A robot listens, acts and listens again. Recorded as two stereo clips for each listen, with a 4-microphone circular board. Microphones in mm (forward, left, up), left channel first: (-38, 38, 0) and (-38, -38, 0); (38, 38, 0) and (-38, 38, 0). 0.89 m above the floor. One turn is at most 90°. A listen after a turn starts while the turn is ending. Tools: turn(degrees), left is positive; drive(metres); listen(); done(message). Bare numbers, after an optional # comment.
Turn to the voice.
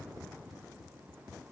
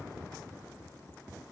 listen()
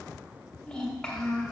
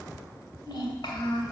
# The child speaking: 10° left.
turn(10)
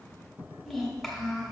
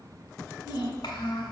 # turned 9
done("Found it: a child speaking, straight ahead.")